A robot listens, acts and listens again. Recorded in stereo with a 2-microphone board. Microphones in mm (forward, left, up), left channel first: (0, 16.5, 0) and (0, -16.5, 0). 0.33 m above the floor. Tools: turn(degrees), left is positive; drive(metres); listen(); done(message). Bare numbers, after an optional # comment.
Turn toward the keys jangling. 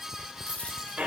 listen()
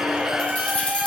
# The keys jangling: about 40° left or 140° left.
turn(40)
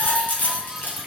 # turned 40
# So it is at 105° left.
turn(105)
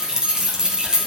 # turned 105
# The keys jangling is now 25° right.
turn(-25)
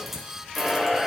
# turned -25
listen()
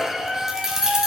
# The keys jangling is now 20° right.
turn(-20)
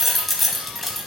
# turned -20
done("Found it: keys jangling, straight ahead, 1 to 2 m away.")